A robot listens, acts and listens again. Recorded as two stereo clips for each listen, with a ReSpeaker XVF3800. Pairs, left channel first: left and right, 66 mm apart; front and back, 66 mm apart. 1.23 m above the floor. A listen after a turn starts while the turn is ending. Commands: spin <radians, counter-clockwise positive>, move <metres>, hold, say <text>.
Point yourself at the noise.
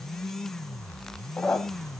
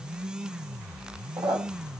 spin 2.97
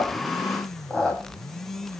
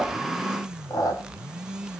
spin 0.17
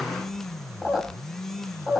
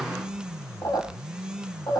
say Found it: a squeak, straight ahead, over 4 m away.